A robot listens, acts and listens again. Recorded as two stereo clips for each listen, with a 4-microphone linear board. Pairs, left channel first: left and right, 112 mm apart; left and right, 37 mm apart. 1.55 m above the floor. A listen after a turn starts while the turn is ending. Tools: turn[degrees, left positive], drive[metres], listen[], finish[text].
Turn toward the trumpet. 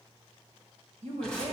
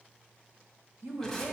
Action: listen[]
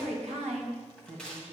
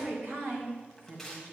Action: listen[]
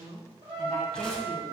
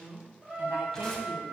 Thought: The trumpet: about 45° right or 135° right.
Action: turn[-45]
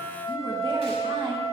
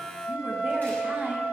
Thought: So it is at 85° right.
Action: turn[-85]
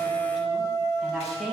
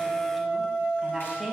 Thought: The trumpet is now 35° right.
Action: turn[-35]
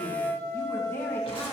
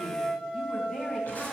Thought: The trumpet is now 20° right.
Action: turn[-20]
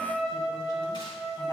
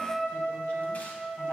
Action: finish[Found it: a trumpet, straight ahead, 2 to 4 m away.]